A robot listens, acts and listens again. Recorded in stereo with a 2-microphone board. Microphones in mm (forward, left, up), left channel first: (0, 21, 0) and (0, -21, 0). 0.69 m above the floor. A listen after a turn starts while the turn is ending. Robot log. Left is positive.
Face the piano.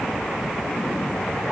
cmd idle
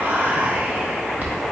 cmd idle
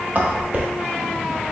end: I can't make out a piano to turn to.